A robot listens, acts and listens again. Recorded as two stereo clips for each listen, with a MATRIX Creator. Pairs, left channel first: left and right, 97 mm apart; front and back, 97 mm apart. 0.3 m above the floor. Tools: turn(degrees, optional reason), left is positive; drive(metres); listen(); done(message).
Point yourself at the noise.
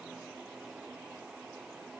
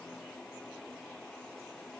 listen()
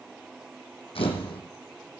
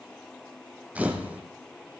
turn(degrees=105, reason="The camera shutter: 105° left.")
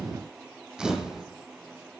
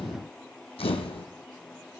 done("Facing the camera shutter.")